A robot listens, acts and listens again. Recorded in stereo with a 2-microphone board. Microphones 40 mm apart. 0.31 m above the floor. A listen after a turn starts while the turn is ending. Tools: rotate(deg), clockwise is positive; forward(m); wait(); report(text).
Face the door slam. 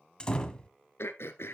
rotate(-20)
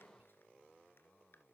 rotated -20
wait()
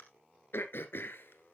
report("I heard a door slam, but can't make it out now. It was about straight ahead or 140° left.")